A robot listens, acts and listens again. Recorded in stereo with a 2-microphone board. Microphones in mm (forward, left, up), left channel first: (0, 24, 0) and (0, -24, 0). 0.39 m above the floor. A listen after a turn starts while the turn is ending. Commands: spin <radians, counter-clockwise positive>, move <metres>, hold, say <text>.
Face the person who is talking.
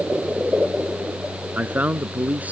spin -0.52
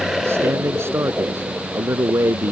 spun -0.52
spin -2.01
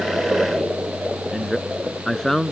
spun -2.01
say Found it: a man speaking, straight ahead.